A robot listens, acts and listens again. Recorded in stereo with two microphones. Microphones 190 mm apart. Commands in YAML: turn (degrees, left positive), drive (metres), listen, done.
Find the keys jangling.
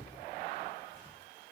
listen: true
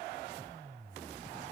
listen: true
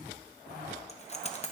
turn: 35
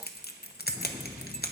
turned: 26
turn: 115
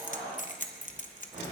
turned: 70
turn: 45
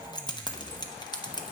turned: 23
turn: 25
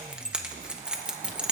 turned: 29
done: "Facing the keys jangling."